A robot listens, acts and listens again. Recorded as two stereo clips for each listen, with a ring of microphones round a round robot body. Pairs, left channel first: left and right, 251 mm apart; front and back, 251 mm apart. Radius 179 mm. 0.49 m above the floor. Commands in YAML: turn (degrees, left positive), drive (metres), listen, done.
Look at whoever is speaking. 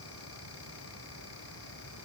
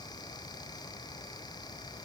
listen: true
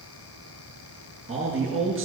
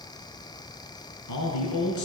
done: "Facing the man speaking."